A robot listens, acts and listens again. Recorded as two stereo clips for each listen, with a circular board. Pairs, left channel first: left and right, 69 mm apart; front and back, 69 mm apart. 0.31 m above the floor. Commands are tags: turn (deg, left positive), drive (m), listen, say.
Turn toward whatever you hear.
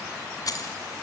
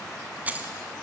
<turn deg="115"/>
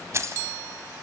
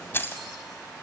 <turn deg="-55"/>
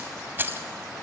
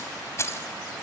<turn deg="-40"/>
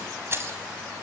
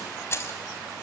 <turn deg="-45"/>
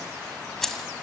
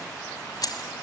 <say>Facing the keys jangling, 1 to 2 m away.</say>